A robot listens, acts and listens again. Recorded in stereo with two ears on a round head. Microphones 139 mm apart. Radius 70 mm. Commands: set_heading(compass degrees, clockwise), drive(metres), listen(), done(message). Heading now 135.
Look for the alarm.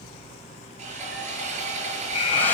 set_heading(90)
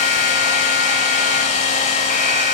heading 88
listen()
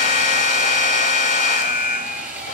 set_heading(3)
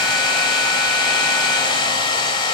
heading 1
listen()
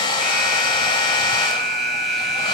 done("Facing the alarm.")